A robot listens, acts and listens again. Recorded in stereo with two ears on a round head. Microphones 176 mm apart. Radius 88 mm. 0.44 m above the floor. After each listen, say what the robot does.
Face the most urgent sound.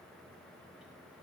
Keep listening.
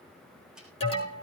Turn 30° left.
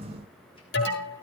Turn 120° left.
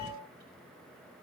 Keep listening.
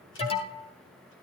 Turn 30° left.
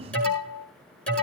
Facing the alarm.